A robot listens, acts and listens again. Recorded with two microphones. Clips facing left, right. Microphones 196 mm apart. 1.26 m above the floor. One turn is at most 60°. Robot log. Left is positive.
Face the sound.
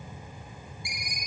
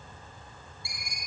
note: The ringtone: about 15° left or 165° left.
cmd yaw +15
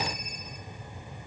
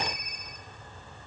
cmd idle
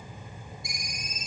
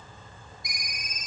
note: So it is at 150° left.
cmd yaw +60
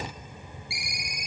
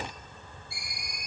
note: The ringtone is now 90° left.
cmd yaw +60
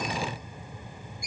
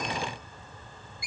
note: The ringtone is now 45° left.
cmd yaw +45
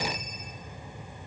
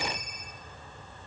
cmd idle
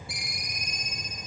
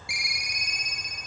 note: The ringtone is now 10° right.
cmd yaw -10
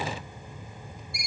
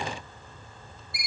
end: Facing the ringtone, under 1 m away.